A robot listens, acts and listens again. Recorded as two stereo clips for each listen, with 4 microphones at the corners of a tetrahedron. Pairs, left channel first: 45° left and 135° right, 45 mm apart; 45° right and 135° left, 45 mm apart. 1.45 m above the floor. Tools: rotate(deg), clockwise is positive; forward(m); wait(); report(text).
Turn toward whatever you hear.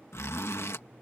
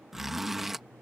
rotate(-50)
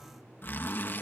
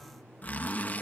report("Found it: a zipper, straight ahead.")